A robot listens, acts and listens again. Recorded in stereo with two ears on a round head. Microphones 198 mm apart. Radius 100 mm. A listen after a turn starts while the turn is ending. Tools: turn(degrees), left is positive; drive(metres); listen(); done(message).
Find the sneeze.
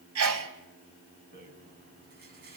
turn(degrees=-70)
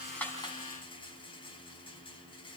listen()
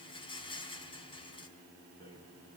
done("I heard a sneeze, but can't make it out now. It was about straight ahead or 40° right.")